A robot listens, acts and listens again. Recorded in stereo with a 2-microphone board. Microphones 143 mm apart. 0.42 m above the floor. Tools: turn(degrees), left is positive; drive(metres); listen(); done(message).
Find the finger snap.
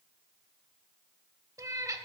listen()
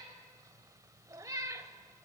listen()
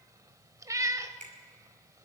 turn(degrees=-60)
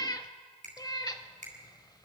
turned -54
turn(degrees=-60)
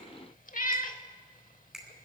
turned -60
done("Facing the finger snap, 2 to 4 m away.")